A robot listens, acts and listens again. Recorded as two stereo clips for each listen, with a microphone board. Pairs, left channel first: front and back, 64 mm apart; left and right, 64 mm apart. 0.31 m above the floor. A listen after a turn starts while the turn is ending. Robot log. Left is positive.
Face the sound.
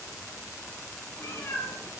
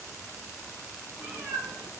note: The cat meowing: 50° right.
cmd yaw -50
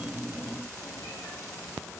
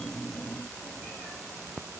cmd idle
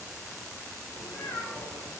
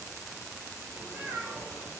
note: The cat meowing is now 20° right.
cmd yaw -20
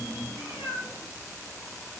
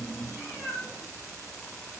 end: Found it: a cat meowing, straight ahead, over 4 m away.